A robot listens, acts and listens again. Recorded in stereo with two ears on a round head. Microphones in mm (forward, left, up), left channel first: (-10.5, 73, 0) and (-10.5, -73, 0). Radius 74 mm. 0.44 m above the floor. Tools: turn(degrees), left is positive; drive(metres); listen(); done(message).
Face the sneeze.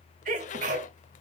turn(degrees=-50)
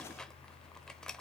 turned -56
listen()
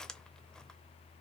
done("I heard a sneeze, but can't make it out now. It was about 5° left or 75° right.")